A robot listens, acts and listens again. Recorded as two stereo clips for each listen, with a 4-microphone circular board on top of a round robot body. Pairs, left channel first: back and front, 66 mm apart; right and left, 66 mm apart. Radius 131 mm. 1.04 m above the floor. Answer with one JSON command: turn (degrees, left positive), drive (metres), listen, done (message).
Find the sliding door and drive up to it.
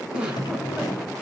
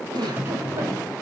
{"turn": 150}
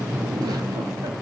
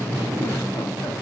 {"turn": 45}
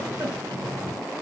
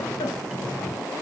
{"drive": 1.0}
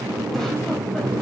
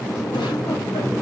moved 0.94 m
{"drive": 1.0}
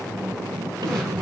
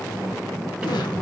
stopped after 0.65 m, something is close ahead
{"turn": 10}
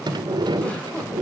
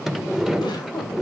{"done": "Arrived at the sliding door, straight ahead."}